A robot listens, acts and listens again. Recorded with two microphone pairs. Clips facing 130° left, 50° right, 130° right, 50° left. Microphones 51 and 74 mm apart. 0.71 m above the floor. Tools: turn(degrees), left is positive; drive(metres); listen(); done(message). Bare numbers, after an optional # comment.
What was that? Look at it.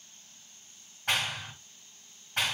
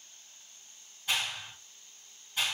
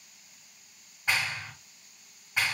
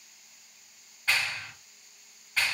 # The clap: 160° left.
turn(160)
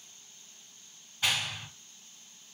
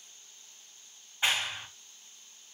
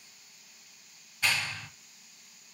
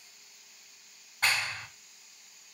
# The clap is now 10° left.
turn(10)
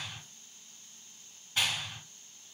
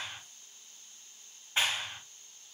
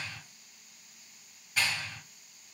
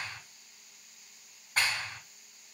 # The clap is now 10° left.
turn(10)
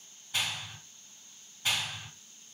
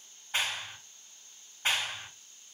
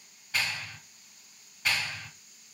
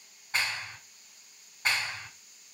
done("Found it: a clap, straight ahead.")